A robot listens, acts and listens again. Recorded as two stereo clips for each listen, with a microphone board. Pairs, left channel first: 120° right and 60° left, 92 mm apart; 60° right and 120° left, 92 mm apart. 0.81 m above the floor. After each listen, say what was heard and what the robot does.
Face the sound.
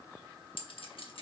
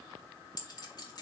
The clink: 100° right. Turn 100° right.
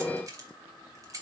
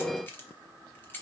The clink is now 10° left. Turn 10° left.
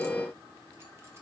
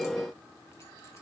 Keep listening.
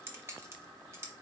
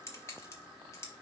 Facing the clink.